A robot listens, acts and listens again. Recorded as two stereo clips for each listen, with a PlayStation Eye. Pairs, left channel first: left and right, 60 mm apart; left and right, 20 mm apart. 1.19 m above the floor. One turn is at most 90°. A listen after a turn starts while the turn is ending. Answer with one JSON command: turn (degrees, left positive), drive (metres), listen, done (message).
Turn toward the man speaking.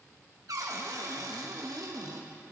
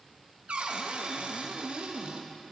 {"listen": true}
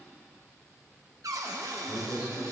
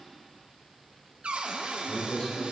{"turn": 90}
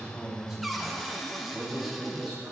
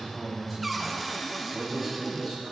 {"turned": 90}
{"turn": -10}
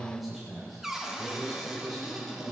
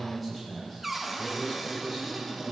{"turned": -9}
{"done": "Found it: a man speaking, straight ahead."}